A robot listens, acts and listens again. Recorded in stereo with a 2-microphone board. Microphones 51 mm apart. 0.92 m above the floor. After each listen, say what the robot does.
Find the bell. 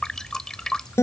Keep listening.
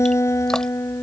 Keep listening.
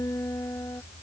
I can't make out a bell, only dripping and a guitar.